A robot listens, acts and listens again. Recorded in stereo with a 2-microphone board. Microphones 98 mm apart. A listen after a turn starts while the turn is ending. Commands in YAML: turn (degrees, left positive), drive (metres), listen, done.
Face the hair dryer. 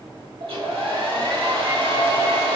turn: -90
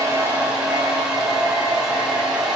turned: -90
turn: -10
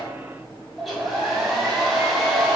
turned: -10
done: "Facing the hair dryer, 1 to 2 m away."